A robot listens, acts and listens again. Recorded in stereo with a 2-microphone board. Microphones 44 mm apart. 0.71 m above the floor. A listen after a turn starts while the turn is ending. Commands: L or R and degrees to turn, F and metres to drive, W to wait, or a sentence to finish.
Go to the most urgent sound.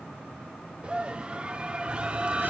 R30
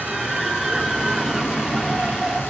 F1.0
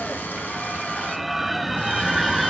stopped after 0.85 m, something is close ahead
I am next to the scream.